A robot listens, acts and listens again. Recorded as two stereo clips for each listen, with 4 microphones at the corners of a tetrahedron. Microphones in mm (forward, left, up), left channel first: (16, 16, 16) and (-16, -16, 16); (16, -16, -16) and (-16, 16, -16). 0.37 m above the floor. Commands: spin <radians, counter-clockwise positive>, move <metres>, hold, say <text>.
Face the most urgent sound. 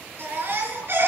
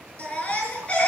spin -1.92
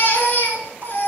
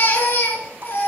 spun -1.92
say Found it: a baby crying, straight ahead.